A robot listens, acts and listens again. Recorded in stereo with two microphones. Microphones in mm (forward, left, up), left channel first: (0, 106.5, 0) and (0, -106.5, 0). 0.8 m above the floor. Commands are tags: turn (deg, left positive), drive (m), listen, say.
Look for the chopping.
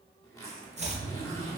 <turn deg="-30"/>
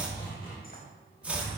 <say>Found it: chopping, straight ahead, 1 to 2 m away.</say>